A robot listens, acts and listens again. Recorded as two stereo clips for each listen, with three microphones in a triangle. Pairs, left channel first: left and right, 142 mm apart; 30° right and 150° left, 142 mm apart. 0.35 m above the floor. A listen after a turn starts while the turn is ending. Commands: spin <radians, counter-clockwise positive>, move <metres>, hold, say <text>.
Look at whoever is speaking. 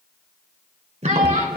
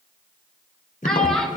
spin -2.01
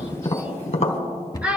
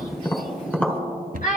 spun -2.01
spin -0.17
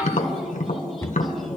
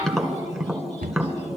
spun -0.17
hold
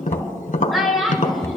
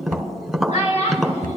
say Found it: a child speaking, straight ahead, 2 to 4 m away.